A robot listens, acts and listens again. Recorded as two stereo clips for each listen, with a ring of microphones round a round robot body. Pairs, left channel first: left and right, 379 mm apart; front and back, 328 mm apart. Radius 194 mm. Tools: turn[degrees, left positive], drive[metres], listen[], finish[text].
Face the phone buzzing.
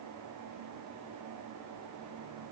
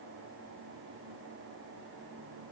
Action: listen[]
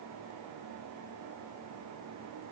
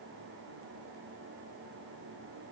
Action: listen[]
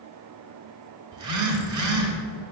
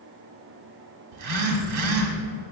Thought: The phone buzzing: 135° right.
Action: turn[-135]
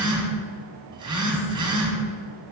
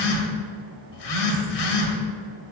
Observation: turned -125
Thought: The phone buzzing is now 10° right.
Action: turn[-10]
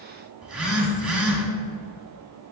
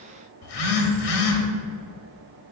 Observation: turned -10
Action: finish[Found it: a phone buzzing, straight ahead.]